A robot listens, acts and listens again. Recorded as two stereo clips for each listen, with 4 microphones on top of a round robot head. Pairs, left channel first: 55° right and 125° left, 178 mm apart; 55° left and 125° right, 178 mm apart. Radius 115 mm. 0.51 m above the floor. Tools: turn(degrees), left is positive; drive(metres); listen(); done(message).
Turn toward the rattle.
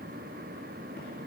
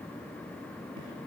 listen()
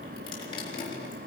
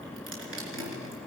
listen()
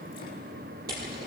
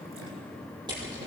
turn(degrees=165)
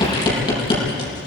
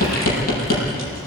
turn(degrees=15)
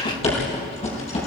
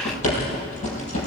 done("Facing the rattle.")